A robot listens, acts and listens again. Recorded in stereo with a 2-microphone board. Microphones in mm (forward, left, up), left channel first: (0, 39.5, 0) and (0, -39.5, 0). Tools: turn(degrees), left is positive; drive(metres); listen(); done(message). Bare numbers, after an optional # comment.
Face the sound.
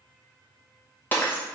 # The breaking glass: about 25° left or 155° left.
turn(25)
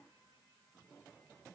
listen()
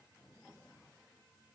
done("I heard breaking glass, but can't make it out now. It was about straight ahead or 130° left.")